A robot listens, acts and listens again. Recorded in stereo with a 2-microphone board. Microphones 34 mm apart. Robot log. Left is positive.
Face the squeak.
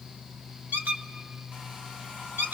note: The squeak: about 65° right or 115° right.
cmd yaw -65
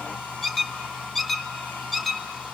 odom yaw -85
end: Found it: a squeak, straight ahead.